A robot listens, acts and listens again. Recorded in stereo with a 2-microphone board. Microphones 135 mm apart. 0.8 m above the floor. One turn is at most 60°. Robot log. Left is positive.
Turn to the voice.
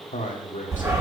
cmd yaw +60
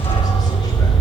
note: Nothing new. It was at 30° left.
cmd yaw +30
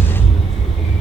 cmd idle
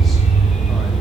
end: Facing where the man speaking came from. I can't hear it now.